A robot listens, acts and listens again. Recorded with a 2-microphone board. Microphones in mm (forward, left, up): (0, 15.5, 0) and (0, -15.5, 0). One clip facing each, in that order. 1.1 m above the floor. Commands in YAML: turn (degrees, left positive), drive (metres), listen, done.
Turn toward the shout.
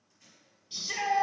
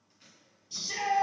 turn: 30
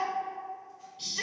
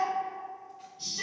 turn: 120
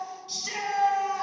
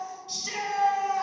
turn: 15
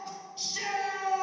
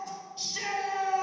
done: "Found it: a shout, straight ahead, 2 to 4 m away."